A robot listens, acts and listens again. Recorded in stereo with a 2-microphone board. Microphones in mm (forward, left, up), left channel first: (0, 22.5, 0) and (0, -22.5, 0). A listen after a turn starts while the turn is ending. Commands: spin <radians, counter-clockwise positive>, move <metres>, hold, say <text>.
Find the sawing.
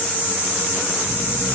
hold
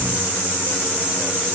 hold
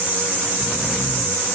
say I can't make out sawing to turn to.